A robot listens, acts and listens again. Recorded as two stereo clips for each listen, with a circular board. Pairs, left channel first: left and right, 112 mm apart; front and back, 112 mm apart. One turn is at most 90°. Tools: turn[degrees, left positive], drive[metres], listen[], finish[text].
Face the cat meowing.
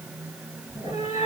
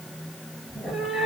Thought: The cat meowing: 90° left.
Action: turn[90]
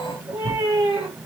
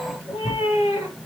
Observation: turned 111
Thought: The cat meowing is now 35° right.
Action: turn[-35]
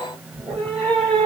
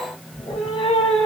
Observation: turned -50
Thought: The cat meowing is now 10° left.
Action: turn[10]
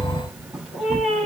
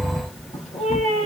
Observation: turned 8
Action: finish[Facing the cat meowing.]